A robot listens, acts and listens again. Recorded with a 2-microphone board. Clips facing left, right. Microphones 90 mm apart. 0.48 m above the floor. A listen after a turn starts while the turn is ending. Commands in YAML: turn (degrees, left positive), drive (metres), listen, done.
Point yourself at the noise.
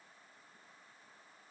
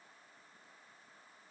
listen: true
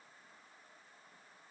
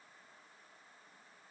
listen: true
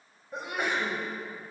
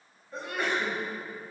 turn: 15
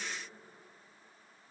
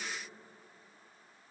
listen: true
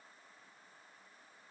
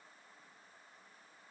done: "I heard a sneeze, but can't make it out now. It was about straight ahead or 150° left."